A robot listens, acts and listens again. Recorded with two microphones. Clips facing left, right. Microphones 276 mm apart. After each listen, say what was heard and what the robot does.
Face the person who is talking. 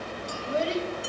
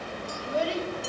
The child speaking: about 25° left or 155° left. Turn 25° left.
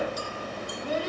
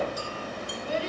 So it is at 125° left. Turn 125° left.
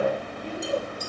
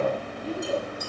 Facing the child speaking, over 4 m away.